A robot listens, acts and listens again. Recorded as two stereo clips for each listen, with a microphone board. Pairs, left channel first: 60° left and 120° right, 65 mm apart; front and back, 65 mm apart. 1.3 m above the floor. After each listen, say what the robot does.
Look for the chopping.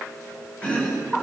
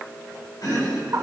Turn 10° right.
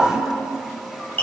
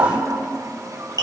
Facing the chopping.